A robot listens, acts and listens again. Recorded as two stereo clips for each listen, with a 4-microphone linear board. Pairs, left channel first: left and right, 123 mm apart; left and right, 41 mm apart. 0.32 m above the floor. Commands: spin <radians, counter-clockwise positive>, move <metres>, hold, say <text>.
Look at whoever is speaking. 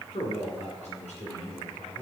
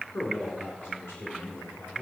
spin 1.13
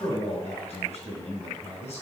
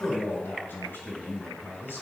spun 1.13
spin 1.05
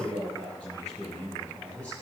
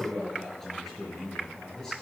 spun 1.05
spin 0.17
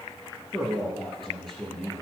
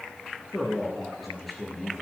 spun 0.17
say Facing the man speaking.